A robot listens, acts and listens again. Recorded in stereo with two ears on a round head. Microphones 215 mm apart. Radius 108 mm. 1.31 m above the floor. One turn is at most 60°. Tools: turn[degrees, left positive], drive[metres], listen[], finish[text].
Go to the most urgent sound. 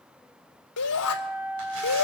Action: turn[60]
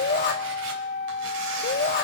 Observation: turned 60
Thought: So it is at 40° left.
Action: turn[40]
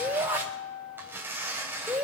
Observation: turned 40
Thought: The shout is now 10° right.
Action: turn[-10]
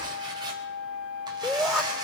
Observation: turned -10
Action: drive[1.0]
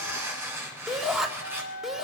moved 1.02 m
Action: drive[1.0]
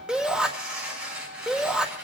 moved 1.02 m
Action: drive[1.0]
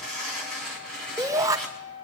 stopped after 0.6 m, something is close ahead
Thought: The shout is now 15° right.
Action: turn[-15]
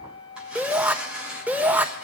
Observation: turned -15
Action: finish[I am next to the shout.]